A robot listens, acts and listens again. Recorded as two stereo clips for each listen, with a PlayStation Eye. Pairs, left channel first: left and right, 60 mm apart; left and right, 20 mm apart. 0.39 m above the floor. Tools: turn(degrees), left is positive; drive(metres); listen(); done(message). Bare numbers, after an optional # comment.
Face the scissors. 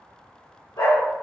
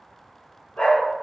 listen()
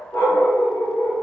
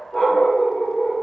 listen()
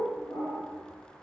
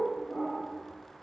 done("I can't make out scissors, only a dog barking.")